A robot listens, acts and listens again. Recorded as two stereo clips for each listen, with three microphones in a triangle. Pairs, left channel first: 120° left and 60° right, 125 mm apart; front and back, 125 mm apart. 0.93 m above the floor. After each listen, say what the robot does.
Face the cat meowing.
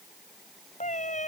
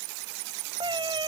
Turn 130° left.
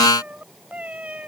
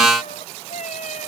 Turn 20° left.
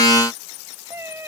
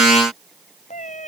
Turn 10° left.
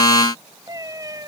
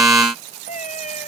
Facing the cat meowing.